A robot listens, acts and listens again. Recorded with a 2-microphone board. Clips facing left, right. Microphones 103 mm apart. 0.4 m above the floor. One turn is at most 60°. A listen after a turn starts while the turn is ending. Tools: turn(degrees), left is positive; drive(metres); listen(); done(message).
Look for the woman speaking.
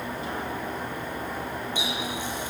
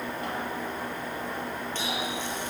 listen()
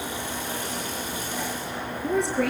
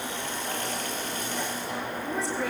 turn(degrees=60)
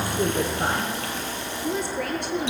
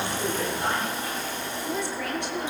listen()
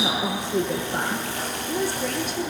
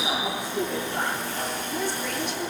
turn(degrees=50)
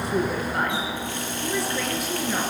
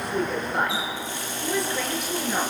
done("Facing the woman speaking, over 4 m away.")